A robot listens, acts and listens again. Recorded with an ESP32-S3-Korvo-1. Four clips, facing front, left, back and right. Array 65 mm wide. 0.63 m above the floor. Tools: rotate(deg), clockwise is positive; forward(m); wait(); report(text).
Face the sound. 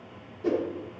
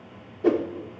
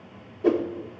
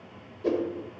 rotate(-115)
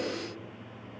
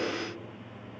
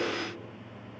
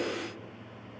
wait()
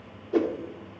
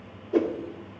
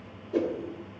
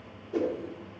rotate(-35)
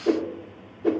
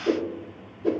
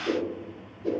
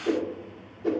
report("Found it: a whoosh, straight ahead, 1 to 2 m away.")